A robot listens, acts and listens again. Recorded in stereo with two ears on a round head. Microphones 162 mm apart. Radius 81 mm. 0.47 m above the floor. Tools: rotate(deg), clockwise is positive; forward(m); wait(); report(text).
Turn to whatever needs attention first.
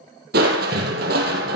wait()
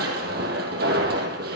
wait()
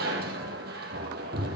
report("I can't make out anything urgent to turn to.")